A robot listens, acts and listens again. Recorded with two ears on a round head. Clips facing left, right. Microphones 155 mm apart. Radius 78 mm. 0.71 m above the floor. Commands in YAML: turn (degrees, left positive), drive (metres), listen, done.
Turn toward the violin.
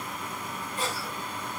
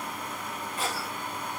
listen: true
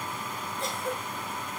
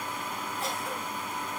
listen: true
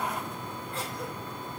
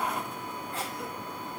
done: "I can't make out a violin to turn to."